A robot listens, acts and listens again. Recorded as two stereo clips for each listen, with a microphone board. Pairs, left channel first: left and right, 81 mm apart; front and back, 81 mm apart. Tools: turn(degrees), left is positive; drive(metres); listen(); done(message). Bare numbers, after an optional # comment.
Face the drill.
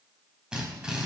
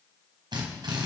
# The drill: 170° right.
turn(-170)
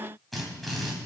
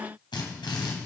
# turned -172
done("Facing the drill.")